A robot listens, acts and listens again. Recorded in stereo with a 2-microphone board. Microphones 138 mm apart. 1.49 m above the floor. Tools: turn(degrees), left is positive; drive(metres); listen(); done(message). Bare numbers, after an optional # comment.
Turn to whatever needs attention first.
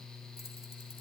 listen()
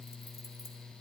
listen()
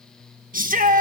# The shout: about 70° right or 110° right.
turn(-70)
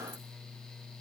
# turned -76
listen()
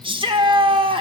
# So it is at 35° right.
turn(-35)
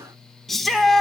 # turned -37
done("Facing the shout.")